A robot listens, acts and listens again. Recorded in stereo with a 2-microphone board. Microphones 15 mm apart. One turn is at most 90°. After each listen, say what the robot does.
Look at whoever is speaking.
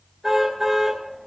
Keep listening.
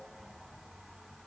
Keep listening.
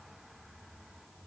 I can't make out anyone speaking to turn to.